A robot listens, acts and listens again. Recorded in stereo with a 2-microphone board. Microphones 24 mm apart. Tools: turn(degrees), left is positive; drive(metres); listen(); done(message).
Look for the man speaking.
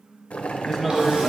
turn(degrees=-30)
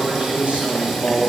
turn(degrees=-115)
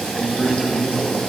done("Facing the man speaking, 1 to 2 m away.")